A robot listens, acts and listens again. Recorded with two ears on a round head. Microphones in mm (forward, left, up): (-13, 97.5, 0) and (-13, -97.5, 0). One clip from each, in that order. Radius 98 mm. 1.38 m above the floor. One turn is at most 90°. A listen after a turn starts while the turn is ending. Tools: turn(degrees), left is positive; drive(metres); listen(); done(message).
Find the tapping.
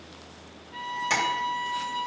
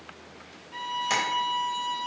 turn(degrees=-30)
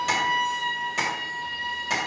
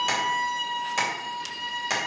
turn(degrees=-90)
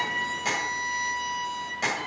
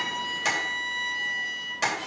turn(degrees=-30)
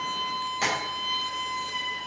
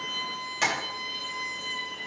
turn(degrees=-10)
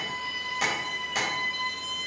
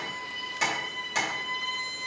done("Found it: tapping, straight ahead, 2 to 4 m away.")